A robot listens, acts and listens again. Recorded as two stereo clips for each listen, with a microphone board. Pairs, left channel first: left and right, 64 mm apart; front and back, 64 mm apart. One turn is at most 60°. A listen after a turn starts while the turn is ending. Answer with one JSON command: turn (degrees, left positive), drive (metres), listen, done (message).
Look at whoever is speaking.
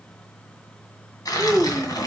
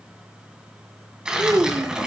{"turn": -60}
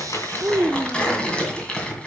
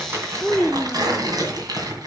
{"turn": -60}
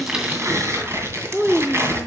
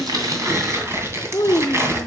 {"turn": -20}
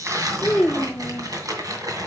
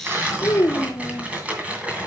{"done": "Facing the child speaking, under 1 m away."}